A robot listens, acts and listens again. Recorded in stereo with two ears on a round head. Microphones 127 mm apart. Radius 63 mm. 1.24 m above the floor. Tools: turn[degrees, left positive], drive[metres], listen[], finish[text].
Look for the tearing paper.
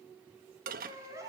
Action: listen[]
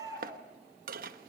Action: listen[]
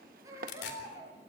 Action: turn[90]
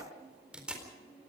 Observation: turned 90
Action: finish[Facing the tearing paper, over 4 m away.]